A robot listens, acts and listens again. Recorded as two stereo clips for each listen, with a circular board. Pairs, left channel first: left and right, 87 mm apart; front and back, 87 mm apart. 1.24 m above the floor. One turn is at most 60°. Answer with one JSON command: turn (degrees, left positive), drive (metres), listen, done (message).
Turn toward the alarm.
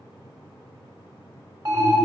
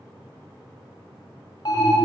{"turn": -40}
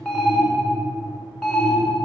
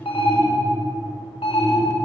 {"done": "Facing the alarm."}